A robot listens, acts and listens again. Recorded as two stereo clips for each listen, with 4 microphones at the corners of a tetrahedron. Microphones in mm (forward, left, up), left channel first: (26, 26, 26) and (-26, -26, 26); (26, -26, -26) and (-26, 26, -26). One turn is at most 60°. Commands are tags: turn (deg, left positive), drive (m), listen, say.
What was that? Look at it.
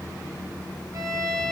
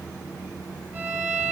<turn deg="-60"/>
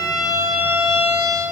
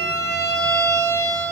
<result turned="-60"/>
<turn deg="-60"/>
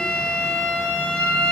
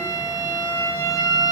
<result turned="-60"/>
<turn deg="-30"/>
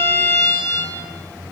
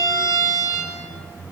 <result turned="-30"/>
<say>Facing the violin, over 4 m away.</say>